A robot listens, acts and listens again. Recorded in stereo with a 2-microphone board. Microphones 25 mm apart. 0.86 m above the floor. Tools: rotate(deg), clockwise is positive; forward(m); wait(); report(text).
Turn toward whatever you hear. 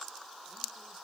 wait()
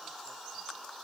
wait()
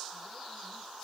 report("I can't make out anything to turn to.")